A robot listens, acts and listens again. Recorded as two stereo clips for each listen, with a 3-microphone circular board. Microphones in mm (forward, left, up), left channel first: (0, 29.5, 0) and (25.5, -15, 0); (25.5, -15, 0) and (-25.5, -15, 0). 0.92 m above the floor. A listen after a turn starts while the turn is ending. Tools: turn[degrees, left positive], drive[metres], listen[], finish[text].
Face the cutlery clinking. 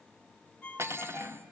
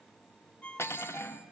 Thought: The cutlery clinking: 30° right.
Action: turn[-30]
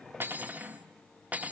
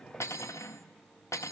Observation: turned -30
Action: finish[Facing the cutlery clinking.]